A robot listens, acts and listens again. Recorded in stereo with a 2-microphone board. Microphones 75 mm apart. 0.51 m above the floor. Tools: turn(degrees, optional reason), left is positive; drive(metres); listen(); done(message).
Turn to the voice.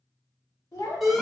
turn(degrees=65, reason="The child speaking: about 65° left or 115° left.")
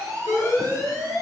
listen()
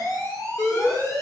listen()
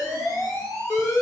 done("I heard a child speaking, but can't make it out now. It was about straight ahead or 50° left.")